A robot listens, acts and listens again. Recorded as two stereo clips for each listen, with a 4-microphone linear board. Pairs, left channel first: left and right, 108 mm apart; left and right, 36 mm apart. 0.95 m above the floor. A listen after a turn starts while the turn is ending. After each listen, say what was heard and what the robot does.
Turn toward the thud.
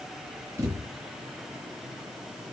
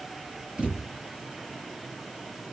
The thud: about 25° right or 155° right. Turn 25° right.
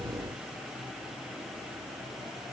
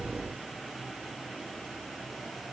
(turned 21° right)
Keep listening.
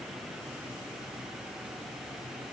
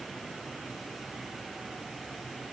I heard a thud, but can't make it out now. It was about straight ahead or 135° right.